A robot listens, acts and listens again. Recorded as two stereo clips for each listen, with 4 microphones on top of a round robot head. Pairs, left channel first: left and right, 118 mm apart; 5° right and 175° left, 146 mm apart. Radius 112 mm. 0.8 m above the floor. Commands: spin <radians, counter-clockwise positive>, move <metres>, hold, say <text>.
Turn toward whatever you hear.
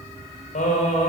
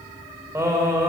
spin 1.83
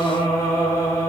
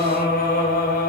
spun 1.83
spin 0.26
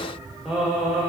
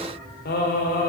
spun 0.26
say Found it: singing, straight ahead.